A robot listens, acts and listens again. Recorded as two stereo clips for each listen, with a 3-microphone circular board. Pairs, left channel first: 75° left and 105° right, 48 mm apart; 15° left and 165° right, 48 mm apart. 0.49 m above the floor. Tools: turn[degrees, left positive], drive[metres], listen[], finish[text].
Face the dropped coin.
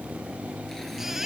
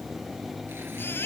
Action: listen[]
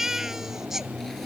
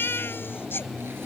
Action: listen[]
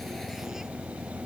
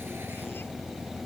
Action: finish[I can't make out a dropped coin, only a baby crying.]